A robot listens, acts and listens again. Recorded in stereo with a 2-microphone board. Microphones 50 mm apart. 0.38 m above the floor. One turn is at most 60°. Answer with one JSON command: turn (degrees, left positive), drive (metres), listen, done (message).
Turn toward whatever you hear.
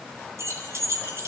{"turn": -60}
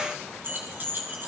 {"turn": -45}
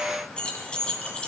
{"turn": 20}
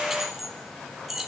{"turn": -10}
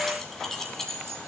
{"done": "Facing the keys jangling."}